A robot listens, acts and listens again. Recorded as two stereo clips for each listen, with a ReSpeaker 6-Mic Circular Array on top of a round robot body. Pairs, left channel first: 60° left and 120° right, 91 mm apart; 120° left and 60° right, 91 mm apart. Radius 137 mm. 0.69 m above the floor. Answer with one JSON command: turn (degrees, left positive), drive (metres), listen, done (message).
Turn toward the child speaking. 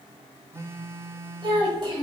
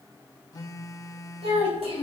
{"turn": -75}
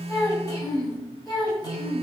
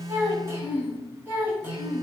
{"turn": 10}
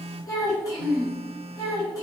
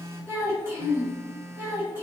{"turn": 10}
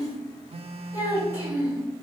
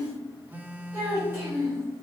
{"done": "Facing the child speaking."}